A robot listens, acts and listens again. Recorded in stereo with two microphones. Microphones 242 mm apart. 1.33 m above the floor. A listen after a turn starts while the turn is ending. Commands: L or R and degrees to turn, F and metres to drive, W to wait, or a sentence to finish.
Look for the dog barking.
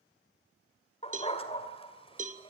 L25
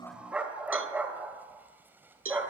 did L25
R10
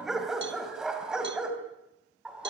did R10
Found it: a dog barking, straight ahead.